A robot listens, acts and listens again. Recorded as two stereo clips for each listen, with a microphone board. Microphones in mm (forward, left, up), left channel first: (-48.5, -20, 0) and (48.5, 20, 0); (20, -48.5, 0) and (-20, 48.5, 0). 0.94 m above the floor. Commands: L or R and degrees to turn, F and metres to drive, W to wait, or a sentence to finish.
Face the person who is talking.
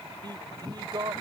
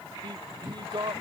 L70
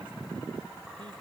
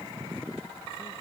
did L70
W
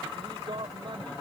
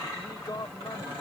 R15
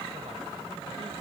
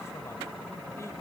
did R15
W
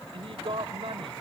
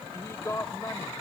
Facing the man speaking.